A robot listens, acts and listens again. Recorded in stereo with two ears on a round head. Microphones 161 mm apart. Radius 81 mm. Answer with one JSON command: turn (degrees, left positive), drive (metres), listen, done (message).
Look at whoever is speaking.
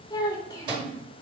{"turn": 20}
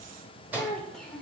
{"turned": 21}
{"done": "Facing the child speaking."}